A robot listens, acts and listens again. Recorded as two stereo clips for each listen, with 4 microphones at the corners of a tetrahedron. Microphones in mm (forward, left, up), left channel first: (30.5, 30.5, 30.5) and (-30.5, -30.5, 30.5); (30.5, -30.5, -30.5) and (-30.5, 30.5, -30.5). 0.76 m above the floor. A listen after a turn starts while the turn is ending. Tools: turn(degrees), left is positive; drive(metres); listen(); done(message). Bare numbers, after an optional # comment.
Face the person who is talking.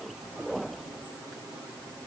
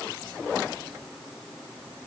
listen()
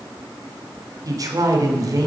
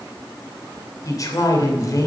# The man speaking: 90° right.
turn(-90)
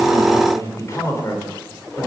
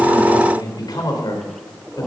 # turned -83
# The man speaking is now 10° right.
turn(-10)
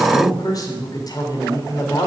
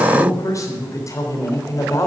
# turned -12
done("Found it: a man speaking, straight ahead.")